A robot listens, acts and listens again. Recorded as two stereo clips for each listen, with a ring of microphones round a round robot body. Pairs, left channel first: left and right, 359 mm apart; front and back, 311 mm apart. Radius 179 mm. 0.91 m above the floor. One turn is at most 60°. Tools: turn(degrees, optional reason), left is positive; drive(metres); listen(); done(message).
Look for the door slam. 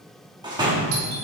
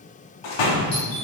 turn(degrees=-10, reason="The door slam: 10° right.")
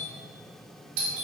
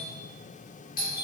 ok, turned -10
done("Facing where the door slam came from. I can't hear it now.")